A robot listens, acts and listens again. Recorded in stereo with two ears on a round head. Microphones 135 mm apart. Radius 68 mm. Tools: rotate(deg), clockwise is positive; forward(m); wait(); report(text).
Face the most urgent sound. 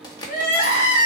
rotate(-65)
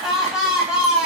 report("Facing the crying, 1 to 2 m away.")